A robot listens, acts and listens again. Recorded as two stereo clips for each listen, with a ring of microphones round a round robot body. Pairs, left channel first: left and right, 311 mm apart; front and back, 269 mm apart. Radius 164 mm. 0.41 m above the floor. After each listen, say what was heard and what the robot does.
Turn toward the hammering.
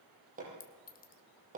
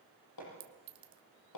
The hammering: 25° right. Turn 25° right.
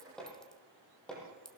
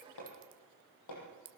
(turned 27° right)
Facing the hammering, over 4 m away.